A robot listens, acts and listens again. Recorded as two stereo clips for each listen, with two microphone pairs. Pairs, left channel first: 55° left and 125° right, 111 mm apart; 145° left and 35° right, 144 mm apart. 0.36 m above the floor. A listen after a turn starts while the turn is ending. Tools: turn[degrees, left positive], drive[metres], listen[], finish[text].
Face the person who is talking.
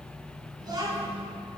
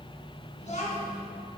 Thought: The child speaking: straight behind.
Action: turn[180]
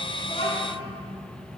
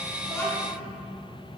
Action: listen[]
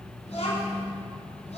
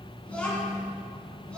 Thought: The child speaking is now 65° left.
Action: turn[65]
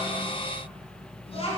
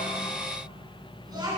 Thought: The child speaking is now 30° left.
Action: turn[30]
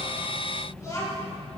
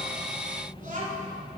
Thought: The child speaking is now 10° right.
Action: turn[-10]
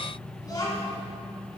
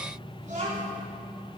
Action: finish[Facing the child speaking, 1 to 2 m away.]